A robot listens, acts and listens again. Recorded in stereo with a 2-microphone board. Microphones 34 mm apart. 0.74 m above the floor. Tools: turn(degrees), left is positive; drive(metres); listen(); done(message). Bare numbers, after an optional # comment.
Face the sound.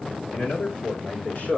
# The man speaking: about 65° left or 115° left.
turn(65)
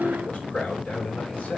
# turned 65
# So it is at 40° left.
turn(40)
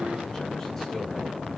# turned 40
listen()
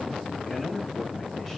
done("Found it: a man speaking, straight ahead, over 4 m away.")